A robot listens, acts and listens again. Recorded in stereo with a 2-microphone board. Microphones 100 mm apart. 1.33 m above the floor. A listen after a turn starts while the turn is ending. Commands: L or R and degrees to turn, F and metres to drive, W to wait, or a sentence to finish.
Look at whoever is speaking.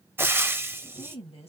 L90
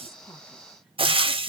W
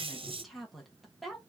Found it: a woman speaking, straight ahead, 1 to 2 m away.